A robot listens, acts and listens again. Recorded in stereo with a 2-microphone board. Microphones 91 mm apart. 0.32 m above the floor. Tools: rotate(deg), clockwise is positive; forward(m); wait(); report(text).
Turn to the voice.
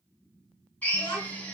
rotate(-45)
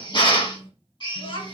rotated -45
rotate(-85)
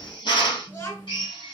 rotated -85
rotate(-35)
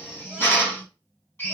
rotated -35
wait()
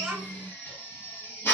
report("Found it: a child speaking, straight ahead, 2 to 4 m away.")